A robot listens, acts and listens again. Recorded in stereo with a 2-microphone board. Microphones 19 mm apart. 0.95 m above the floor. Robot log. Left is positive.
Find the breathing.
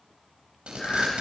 note: The breathing: about 35° left or 145° left.
cmd yaw +35
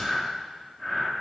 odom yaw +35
end: Found it: breathing, straight ahead, 2 to 4 m away.